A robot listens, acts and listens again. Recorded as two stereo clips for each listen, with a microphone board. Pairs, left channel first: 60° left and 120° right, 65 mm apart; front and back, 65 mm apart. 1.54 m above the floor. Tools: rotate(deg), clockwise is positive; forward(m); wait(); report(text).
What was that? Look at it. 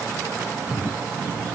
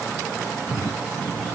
wait()
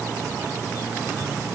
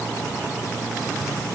wait()
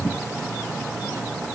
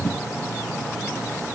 report("I can't make out anything.")